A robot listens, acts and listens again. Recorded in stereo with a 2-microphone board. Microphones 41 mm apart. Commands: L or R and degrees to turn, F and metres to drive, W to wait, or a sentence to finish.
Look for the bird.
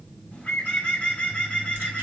L35
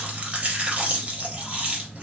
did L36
W
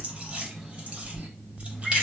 W
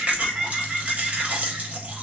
Facing the bird.